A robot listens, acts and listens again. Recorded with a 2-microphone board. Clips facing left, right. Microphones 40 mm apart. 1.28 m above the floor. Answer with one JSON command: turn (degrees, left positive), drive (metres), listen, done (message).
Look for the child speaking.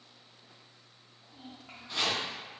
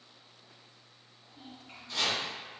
{"turn": 75}
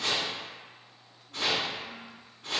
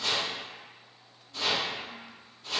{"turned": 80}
{"listen": true}
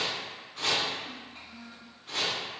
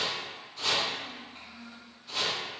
{"done": "Facing the child speaking, 1 to 2 m away."}